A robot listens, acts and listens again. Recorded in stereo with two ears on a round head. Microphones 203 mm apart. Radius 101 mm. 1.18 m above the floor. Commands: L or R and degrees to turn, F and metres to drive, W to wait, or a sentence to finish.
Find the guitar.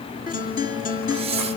L40
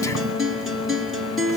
Found it: a guitar, straight ahead.